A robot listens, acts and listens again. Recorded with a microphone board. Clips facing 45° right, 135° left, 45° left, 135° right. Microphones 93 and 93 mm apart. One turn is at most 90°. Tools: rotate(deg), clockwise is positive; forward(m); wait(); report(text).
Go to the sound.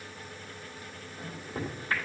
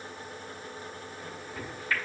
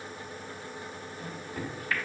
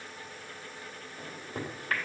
rotate(90)
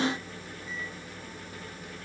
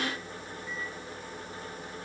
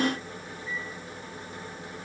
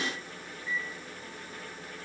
rotate(30)
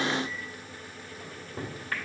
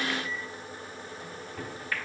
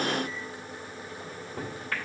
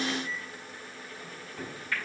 forward(1.0)
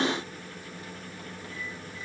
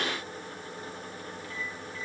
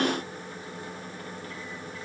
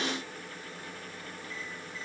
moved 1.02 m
wait()
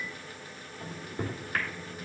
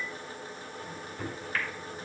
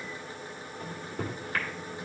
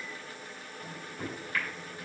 forward(1.0)
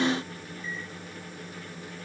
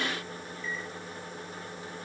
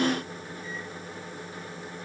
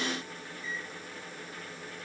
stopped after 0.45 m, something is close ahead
report("Arrived at the microwave, straight ahead.")